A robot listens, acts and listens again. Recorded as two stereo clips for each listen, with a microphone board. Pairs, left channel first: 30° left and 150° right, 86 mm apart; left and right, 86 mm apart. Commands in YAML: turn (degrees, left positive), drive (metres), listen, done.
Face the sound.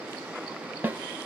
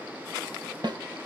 turn: -85
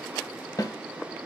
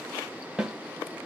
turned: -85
done: "Found it: a snare drum, straight ahead, 1 to 2 m away."